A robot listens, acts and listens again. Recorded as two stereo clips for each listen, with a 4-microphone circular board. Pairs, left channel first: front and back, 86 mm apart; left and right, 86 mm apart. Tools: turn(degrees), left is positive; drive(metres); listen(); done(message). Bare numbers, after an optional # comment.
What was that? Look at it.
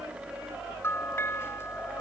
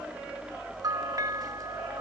# The bell: 55° right.
turn(-55)
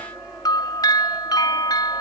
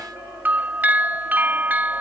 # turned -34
# The bell is now 25° right.
turn(-25)
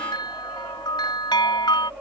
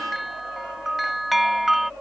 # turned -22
done("Facing the bell.")